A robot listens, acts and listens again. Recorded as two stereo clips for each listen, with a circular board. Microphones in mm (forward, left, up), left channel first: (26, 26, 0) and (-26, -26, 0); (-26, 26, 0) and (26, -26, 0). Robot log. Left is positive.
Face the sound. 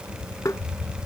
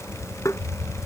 note: The tapping: 90° left.
cmd yaw +90
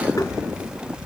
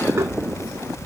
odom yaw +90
cmd idle
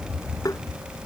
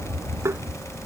note: The tapping is now 10° left.
cmd yaw +10
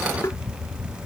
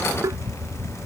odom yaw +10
end: Found it: tapping, straight ahead.